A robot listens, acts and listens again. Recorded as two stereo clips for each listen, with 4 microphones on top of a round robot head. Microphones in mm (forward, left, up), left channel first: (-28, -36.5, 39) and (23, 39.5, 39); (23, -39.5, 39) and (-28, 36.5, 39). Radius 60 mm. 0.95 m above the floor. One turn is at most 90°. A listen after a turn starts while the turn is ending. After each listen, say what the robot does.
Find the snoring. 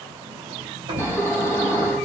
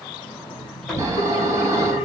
Turn 90° left.
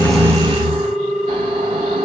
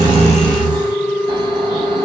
Turn 85° left.
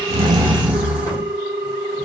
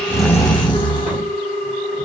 Turn 20° right.
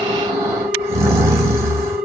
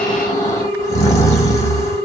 Found it: snoring, straight ahead.